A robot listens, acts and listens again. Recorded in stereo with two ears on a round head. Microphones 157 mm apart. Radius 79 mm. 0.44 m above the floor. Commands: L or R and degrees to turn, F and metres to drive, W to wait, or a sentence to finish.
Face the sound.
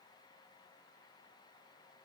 W
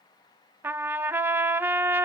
R30
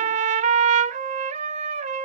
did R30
R140
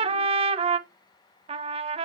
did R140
R35
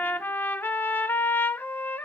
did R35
L10
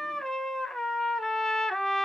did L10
Found it: a trumpet, straight ahead.